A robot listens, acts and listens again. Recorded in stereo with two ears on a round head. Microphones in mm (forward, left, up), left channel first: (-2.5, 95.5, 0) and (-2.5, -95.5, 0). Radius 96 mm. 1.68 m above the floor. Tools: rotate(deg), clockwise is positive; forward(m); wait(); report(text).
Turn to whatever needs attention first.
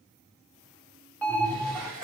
rotate(-30)
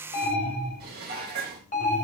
rotate(-140)
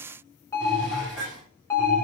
rotate(-15)
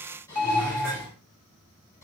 report("Found it: an alarm, straight ahead.")